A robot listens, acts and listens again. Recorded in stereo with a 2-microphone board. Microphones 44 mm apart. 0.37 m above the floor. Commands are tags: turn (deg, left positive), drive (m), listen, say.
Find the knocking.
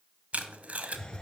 <listen/>
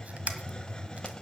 <listen/>
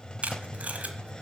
<say>I can't make out knocking to turn to.</say>